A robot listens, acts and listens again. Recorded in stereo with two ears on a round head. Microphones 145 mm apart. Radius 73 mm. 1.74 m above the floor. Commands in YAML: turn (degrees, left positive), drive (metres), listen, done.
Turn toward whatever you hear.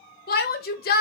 turn: 60
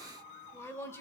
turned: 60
turn: 15
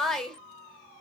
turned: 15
done: "Found it: a shout, straight ahead, 1 to 2 m away."